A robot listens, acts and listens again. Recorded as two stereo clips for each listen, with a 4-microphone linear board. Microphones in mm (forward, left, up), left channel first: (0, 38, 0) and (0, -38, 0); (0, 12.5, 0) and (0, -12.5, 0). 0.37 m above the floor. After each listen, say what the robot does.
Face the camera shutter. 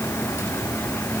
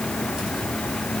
Keep listening.
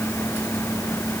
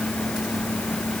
Keep listening.
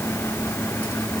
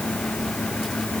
I can't make out a camera shutter to turn to.